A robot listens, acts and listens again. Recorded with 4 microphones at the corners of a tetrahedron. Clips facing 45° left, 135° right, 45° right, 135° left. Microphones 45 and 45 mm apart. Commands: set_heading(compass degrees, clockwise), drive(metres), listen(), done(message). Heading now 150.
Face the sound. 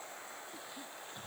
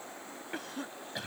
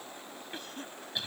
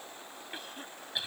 set_heading(295)
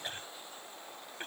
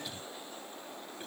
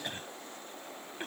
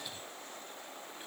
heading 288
done("Facing the cough.")